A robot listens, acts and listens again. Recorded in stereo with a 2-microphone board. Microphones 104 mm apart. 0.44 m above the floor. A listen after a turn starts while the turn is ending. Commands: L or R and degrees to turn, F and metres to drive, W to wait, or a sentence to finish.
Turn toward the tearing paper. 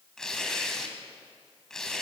L30
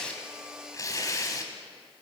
L145
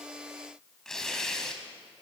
Facing the tearing paper.